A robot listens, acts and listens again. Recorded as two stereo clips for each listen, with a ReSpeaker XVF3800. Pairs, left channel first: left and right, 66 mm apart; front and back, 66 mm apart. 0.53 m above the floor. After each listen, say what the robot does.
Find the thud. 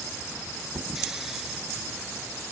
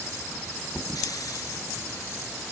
Turn 50° right.
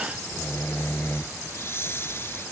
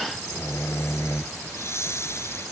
Facing where the thud came from. I can't hear it now.